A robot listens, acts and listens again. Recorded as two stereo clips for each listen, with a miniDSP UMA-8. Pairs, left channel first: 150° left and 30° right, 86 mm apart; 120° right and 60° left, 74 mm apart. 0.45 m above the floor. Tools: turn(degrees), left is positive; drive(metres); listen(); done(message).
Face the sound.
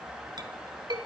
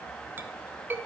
done("Facing the clink, 1 to 2 m away.")